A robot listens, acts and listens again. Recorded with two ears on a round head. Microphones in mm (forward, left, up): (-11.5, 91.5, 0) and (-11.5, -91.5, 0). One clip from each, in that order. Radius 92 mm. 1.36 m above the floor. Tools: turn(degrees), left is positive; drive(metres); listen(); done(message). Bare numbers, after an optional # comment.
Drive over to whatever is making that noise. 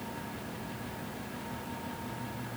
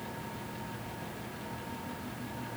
listen()
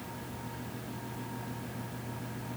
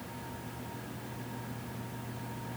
listen()
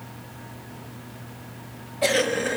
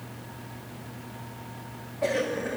# The cough: about 75° left or 105° left.
turn(75)
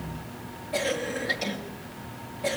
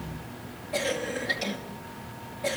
drive(1.0)
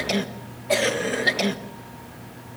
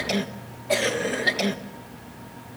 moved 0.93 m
drive(1.0)
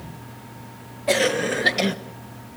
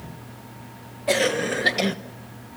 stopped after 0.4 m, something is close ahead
done("I am next to the cough.")